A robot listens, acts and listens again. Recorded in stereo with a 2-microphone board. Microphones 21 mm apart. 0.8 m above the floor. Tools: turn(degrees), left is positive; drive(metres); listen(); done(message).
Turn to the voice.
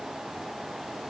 listen()
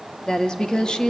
turn(degrees=35)
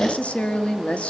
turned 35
turn(degrees=105)
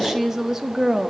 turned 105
turn(degrees=-20)
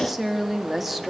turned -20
turn(degrees=-10)
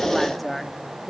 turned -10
done("Found it: a woman speaking, straight ahead.")